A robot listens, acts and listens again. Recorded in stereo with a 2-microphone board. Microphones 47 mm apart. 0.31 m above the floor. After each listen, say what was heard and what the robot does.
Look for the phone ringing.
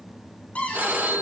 The phone ringing: about 45° right or 135° right. Turn 45° right.
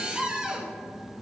Keep listening.
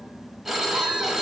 So it is at 10° right. Turn 10° right.
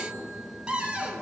Keep listening.
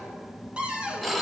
Found it: a phone ringing, straight ahead.